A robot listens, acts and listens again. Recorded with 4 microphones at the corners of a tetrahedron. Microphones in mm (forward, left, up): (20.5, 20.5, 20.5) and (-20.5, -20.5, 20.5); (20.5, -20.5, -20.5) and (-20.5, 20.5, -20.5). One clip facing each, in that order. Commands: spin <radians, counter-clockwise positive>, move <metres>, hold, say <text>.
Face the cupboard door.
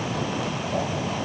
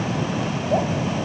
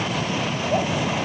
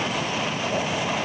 hold
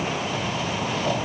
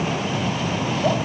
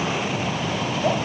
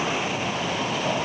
hold
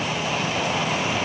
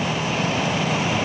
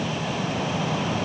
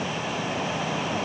say I can't make out a cupboard door to turn to.